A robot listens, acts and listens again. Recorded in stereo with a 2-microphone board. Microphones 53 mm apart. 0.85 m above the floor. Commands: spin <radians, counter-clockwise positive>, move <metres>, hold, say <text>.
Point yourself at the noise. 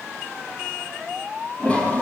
spin 0.44
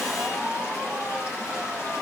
spin 2.27
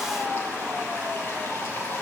spin 0.79
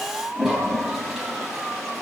say Facing the toilet flushing.